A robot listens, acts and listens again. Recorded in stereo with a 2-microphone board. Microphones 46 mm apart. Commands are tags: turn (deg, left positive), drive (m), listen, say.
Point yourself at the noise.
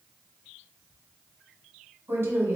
<turn deg="-60"/>
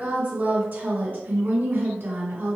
<turn deg="-50"/>
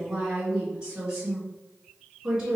<turn deg="-15"/>
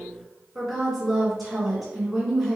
<say>Facing the woman speaking.</say>